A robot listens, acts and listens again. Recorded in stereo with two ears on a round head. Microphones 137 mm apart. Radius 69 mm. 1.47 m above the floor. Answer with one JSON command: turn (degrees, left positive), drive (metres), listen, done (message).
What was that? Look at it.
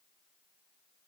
{"listen": true}
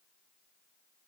{"listen": true}
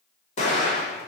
{"turn": 45}
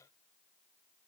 {"listen": true}
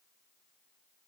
{"done": "I heard an explosion, but can't make it out now. It was about straight ahead or 90° left."}